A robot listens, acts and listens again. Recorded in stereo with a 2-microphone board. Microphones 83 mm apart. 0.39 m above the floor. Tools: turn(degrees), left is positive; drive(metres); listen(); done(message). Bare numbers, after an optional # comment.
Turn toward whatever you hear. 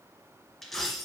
turn(30)
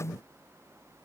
listen()
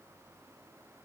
done("I heard a dropped coin, but can't make it out now. It was about 25° right or 145° left.")